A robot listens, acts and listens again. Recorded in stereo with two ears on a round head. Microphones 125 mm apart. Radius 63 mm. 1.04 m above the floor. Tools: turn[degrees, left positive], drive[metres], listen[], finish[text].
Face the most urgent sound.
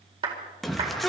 Action: turn[30]
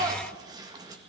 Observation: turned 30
Thought: So it is at 30° right.
Action: turn[-30]
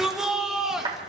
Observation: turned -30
Action: finish[Facing the shout, 1 to 2 m away.]